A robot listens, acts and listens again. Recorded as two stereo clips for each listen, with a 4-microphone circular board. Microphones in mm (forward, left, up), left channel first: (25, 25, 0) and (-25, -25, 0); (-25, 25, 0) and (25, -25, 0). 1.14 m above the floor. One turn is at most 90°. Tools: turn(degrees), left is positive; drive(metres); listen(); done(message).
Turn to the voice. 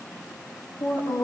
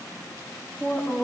done("Facing the woman speaking, over 4 m away.")